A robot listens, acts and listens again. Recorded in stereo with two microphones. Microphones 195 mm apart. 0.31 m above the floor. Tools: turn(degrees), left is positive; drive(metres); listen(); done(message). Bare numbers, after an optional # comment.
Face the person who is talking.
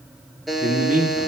# The man speaking: about 40° right or 140° right.
turn(-40)
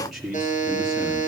done("Found it: a man speaking, straight ahead.")